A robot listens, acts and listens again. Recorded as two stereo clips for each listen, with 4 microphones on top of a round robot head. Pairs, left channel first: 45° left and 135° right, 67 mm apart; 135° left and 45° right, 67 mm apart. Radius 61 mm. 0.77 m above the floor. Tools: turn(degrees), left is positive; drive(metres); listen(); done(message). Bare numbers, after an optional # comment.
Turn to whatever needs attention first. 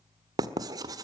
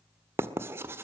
listen()
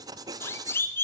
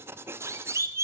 done("Found it: a siren, straight ahead.")